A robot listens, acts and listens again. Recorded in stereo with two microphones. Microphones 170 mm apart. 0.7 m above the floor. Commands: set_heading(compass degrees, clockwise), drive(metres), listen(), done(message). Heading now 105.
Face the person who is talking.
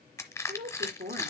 set_heading(175)
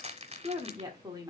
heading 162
set_heading(187)
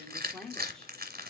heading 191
done("Found it: a woman speaking, straight ahead.")